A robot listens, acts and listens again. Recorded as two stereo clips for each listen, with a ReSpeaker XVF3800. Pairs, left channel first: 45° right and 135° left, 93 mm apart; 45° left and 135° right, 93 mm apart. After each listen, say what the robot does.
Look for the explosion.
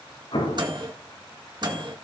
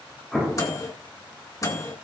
Turn 45° right.
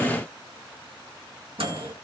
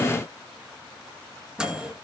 Facing where the explosion came from. I can't hear it now.